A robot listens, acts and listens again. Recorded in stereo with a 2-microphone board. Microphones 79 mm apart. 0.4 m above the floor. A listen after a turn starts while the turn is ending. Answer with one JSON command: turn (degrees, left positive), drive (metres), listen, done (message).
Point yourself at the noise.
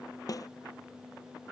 {"turn": 50}
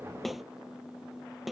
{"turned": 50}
{"done": "Facing the snare drum."}